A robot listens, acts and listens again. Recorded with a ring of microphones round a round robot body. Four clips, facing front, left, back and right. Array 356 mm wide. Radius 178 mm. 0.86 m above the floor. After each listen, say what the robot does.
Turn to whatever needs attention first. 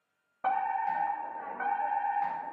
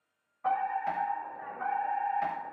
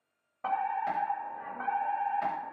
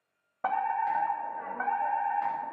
Turn 75° right.
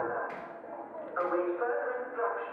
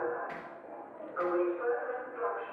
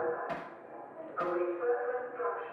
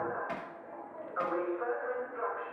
Found it: a fire alarm, straight ahead.